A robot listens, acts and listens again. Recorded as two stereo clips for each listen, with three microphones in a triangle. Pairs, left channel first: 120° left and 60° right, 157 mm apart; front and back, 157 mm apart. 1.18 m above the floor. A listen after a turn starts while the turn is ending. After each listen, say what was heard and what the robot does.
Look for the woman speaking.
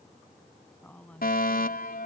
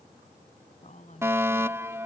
The woman speaking: 40° left. Turn 40° left.
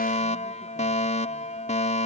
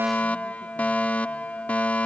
Keep listening.
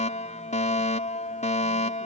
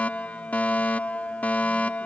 Keep listening.
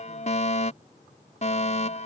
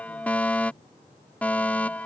I heard a woman speaking from this way, but can't make it out now.